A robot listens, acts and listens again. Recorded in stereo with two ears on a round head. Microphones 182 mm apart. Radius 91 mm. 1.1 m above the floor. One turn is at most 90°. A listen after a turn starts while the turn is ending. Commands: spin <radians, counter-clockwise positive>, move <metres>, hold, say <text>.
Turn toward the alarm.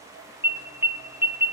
spin -0.52
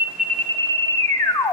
spin 0.26
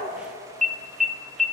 say Found it: an alarm, straight ahead, under 1 m away.